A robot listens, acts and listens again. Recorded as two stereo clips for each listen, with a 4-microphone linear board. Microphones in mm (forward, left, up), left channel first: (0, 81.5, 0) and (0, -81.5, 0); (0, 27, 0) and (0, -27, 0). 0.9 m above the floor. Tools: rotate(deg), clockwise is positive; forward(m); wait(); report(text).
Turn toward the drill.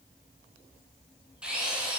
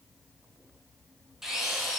rotate(30)
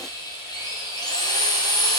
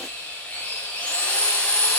rotate(-25)
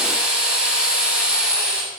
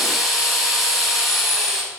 report("Facing the drill, over 4 m away.")